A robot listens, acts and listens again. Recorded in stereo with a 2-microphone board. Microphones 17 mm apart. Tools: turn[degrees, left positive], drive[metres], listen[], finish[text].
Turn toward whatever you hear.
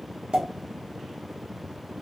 Thought: The pop: about 55° right or 125° right.
Action: turn[-55]
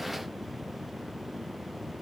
Action: listen[]
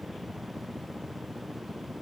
Action: finish[I heard a pop, but can't make it out now. It was about straight ahead or 70° right.]